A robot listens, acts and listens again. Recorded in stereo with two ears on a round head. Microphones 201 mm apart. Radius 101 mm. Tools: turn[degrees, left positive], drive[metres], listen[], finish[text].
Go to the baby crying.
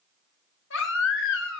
Thought: The baby crying: about 60° left or 120° left.
Action: turn[60]
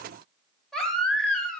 Action: drive[1.0]
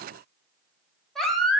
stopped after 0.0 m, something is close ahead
Action: finish[Blocked. The baby crying is further on, straight ahead.]